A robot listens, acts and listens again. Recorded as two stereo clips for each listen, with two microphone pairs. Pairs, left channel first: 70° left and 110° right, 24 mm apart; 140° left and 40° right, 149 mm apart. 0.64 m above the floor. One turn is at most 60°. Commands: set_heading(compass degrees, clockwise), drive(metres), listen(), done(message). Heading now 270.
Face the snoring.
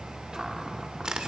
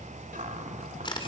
listen()
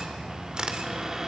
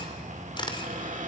listen()
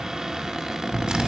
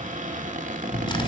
set_heading(210)
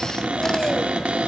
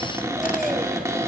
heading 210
set_heading(175)
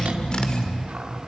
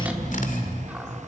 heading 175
set_heading(150)
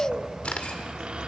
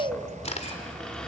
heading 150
done("Found it: snoring, straight ahead.")